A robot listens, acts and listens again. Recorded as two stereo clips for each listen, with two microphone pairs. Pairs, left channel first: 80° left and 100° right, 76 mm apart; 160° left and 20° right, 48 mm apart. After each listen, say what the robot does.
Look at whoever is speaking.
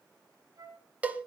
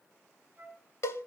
Keep listening.
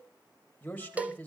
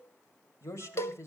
Turn 150° left.
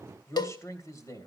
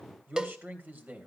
Turn 35° left.
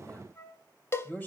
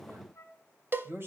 Turn 15° left.
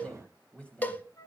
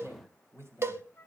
Facing the man speaking.